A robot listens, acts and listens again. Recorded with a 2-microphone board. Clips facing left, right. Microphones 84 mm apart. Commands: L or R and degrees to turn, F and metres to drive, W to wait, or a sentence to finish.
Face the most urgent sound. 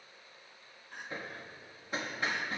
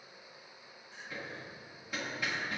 L55
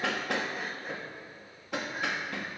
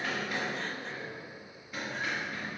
W
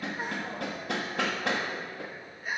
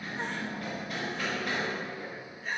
L10
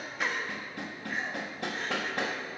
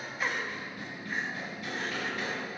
Found it: crying, straight ahead, under 1 m away.